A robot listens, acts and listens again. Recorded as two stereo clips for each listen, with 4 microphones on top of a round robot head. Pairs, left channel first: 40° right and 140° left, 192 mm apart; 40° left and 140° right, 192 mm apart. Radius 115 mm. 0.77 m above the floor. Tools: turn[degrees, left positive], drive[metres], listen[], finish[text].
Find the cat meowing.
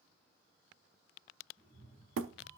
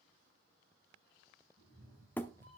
Thought: The cat meowing: 170° right.
Action: turn[-170]
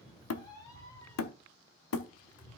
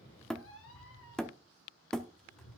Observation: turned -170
Thought: The cat meowing is now 40° left.
Action: turn[40]
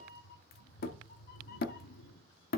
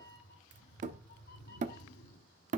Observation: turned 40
Action: finish[Facing the cat meowing.]